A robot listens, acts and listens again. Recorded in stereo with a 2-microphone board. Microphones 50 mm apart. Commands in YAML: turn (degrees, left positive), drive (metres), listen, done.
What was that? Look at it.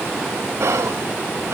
turn: -70
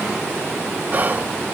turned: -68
turn: -35
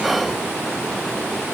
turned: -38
done: "Facing the whispering."